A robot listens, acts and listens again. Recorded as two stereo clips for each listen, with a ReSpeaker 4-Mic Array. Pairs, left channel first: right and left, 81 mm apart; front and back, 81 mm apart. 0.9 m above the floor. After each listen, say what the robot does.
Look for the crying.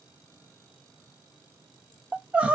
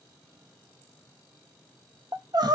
Turn 160° left.
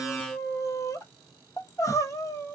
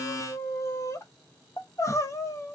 Turn 45° right.
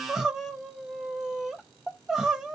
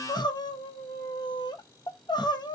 Facing the crying, under 1 m away.